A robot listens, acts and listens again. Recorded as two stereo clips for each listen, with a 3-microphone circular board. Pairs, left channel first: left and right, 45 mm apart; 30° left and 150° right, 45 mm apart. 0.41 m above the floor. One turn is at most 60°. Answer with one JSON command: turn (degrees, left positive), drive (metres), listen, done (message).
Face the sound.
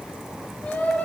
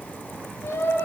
{"turn": 35}
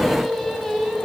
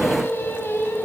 {"done": "Facing the singing."}